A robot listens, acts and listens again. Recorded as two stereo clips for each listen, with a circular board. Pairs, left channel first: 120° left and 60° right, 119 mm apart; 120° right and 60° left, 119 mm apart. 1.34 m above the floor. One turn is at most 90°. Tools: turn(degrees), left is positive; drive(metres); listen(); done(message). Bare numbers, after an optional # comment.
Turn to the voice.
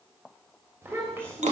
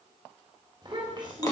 # The child speaking: 10° left.
turn(10)
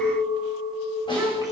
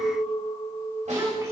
listen()
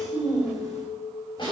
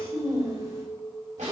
done("Found it: a child speaking, straight ahead.")